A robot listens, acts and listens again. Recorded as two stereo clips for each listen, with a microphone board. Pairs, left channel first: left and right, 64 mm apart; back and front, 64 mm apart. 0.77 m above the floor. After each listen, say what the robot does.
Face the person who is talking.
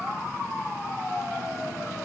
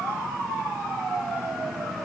Keep listening.
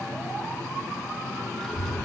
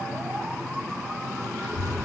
Turn 10° left.
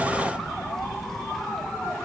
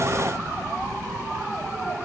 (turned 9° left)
Facing the child speaking.